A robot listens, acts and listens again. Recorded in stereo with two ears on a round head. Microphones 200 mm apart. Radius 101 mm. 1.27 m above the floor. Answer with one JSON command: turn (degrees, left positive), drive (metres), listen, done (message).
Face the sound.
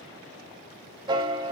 {"turn": -20}
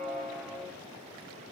{"done": "Found it: a piano, straight ahead."}